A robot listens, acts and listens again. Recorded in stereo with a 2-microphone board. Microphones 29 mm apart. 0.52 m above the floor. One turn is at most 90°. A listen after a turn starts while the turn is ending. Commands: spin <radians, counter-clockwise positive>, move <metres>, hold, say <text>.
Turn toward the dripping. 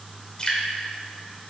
spin 0.52
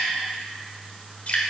spin 1.57
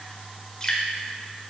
spin 0.44
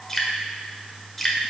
say Facing the dripping.